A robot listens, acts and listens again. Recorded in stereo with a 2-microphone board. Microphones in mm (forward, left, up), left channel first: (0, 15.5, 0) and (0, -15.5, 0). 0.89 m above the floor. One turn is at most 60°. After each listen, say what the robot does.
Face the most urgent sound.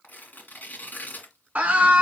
Turn 45° right.
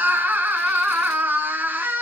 Turn 60° right.
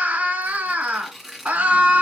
Turn 60° right.
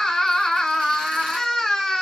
Facing the scream, 1 to 2 m away.